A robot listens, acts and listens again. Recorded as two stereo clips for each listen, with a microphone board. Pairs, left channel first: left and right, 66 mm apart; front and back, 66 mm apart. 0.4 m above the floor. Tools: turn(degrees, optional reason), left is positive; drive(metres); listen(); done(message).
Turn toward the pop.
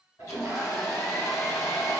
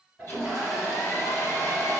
listen()
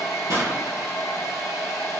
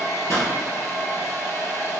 turn(degrees=-55, reason="The pop: 55° right.")
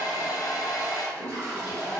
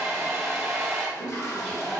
done("Facing where the pop came from. I can't hear it now.")